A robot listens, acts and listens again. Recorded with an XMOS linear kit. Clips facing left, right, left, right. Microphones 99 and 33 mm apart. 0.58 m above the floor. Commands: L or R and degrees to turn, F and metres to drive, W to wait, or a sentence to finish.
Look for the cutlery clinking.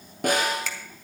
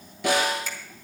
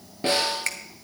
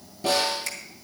W
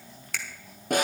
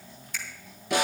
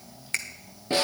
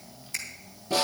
W
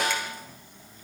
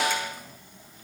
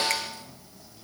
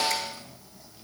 I can't make out cutlery clinking, only a finger snap and a snare drum.